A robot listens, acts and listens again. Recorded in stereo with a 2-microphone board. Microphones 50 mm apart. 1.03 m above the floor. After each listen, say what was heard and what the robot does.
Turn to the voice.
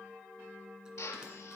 Keep listening.
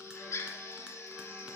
Keep listening.
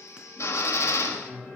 The man speaking: about 20° left or 160° left. Turn 20° left.
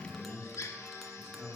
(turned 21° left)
Facing the man speaking.